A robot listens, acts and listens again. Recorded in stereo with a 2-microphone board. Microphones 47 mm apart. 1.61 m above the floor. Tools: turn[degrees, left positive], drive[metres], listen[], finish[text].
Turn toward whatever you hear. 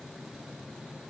Action: listen[]
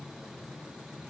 Action: listen[]
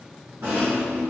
Thought: The rattle: about 75° right or 105° right.
Action: turn[-75]
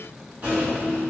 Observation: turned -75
Thought: So it is at 30° right.
Action: turn[-30]
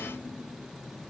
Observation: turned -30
Thought: The rattle is now 10° right.
Action: turn[-10]
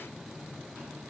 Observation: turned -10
Action: listen[]
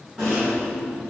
Action: finish[Found it: a rattle, straight ahead, 1 to 2 m away.]